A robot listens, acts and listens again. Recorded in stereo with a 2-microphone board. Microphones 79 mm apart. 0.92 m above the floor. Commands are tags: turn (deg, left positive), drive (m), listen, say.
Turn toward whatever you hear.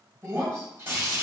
<turn deg="-35"/>
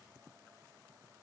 <listen/>
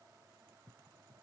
<say>I heard breaking glass, but can't make it out now. It was about straight ahead or 110° right.</say>